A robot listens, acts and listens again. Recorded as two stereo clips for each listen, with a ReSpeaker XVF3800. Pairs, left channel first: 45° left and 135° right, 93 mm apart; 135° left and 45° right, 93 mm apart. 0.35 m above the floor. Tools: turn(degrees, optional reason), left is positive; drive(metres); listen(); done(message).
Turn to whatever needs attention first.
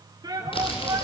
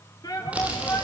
turn(degrees=-175, reason="The shout: 175° right.")
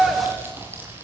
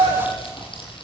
turn(degrees=-50, reason="The shout is now 50° right.")
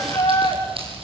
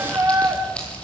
done("Facing the shout, over 4 m away.")